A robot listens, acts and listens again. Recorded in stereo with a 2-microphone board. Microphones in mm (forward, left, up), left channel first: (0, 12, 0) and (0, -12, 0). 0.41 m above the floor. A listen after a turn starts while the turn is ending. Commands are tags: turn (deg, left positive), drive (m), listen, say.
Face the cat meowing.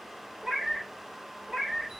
<turn deg="-55"/>
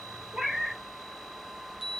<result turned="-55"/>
<turn deg="-65"/>
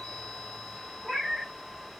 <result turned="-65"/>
<turn deg="10"/>
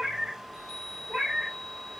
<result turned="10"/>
<say>Facing the cat meowing.</say>